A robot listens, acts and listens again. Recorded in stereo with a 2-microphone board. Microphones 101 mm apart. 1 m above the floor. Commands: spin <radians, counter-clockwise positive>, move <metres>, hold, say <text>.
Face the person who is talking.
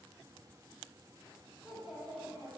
spin -0.52
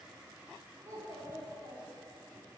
spin -2.53
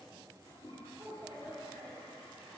spin -0.44
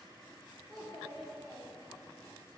say Found it: a child speaking, straight ahead.